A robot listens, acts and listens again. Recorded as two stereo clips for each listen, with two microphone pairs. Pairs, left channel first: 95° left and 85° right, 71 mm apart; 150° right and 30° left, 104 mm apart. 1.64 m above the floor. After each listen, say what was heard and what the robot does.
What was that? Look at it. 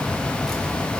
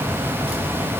Keep listening.
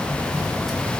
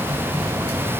Keep listening.
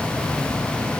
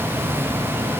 I can't make out anything to turn to.